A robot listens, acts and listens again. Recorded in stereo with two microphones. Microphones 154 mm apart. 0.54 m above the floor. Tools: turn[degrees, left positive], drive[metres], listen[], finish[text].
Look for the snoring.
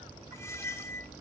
Action: listen[]
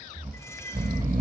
Thought: The snoring: about 65° right or 115° right.
Action: turn[-65]
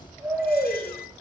Thought: So it is at 10° right.
Action: turn[-10]
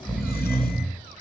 Action: finish[Facing the snoring, 1 to 2 m away.]